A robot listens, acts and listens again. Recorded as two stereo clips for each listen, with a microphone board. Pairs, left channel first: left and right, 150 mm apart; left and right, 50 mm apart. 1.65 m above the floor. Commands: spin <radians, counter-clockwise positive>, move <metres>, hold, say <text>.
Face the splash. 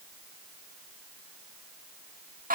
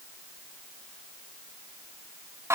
hold
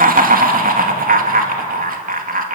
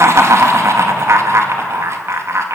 hold
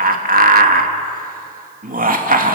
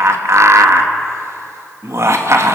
say I can't make out a splash to turn to.